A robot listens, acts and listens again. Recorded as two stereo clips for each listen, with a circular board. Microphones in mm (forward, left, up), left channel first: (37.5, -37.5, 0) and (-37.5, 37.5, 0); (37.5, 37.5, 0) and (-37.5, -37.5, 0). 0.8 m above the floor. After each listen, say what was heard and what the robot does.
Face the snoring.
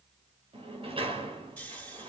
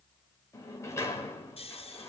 The snoring: 35° left. Turn 35° left.
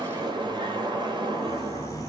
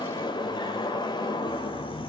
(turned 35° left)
Keep listening.
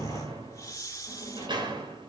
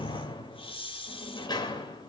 The snoring is now 15° left. Turn 15° left.
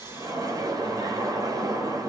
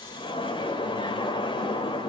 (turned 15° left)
Keep listening.
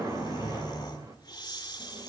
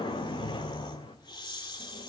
Facing the snoring, 2 to 4 m away.